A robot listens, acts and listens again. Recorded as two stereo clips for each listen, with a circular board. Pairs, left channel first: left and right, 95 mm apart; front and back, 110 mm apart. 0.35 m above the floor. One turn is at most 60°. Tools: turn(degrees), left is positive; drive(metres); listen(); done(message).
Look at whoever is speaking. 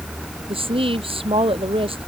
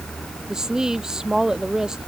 turn(degrees=-60)
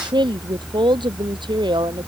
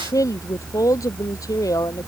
turn(degrees=-60)
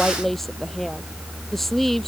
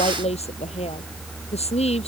done("Facing the woman speaking.")